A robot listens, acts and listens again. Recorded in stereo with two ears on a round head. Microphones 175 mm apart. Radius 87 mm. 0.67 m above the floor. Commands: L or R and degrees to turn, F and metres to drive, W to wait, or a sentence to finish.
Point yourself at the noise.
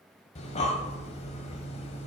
L35
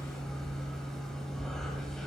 Found it: breathing, straight ahead, 1 to 2 m away.